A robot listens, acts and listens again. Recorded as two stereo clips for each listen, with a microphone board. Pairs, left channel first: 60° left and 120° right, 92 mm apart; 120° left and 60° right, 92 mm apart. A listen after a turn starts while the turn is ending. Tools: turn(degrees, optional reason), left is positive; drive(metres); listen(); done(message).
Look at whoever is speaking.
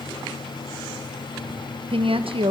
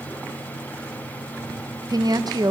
turn(degrees=-105, reason="The woman speaking: 105° right.")
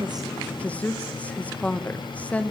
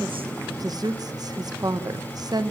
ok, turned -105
turn(degrees=-15, reason="The woman speaking is now 15° right.")
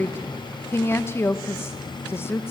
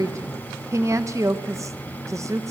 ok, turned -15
done("Facing the woman speaking, 1 to 2 m away.")